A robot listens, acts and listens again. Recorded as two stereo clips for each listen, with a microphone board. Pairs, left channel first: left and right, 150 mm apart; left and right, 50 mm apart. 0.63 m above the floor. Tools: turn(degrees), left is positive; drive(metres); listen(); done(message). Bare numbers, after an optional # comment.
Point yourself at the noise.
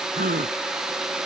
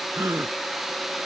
# The gasp: about 70° right or 110° right.
turn(-70)
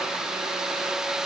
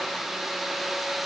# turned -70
listen()
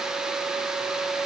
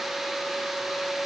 done("I heard a gasp, but can't make it out now. It was about straight ahead or 40° right.")